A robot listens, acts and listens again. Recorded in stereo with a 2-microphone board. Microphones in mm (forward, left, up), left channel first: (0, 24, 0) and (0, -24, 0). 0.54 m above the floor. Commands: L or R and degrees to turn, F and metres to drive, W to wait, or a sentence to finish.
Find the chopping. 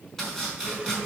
L30
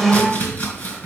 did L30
L140
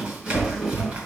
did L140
R30
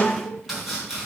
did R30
Facing the chopping.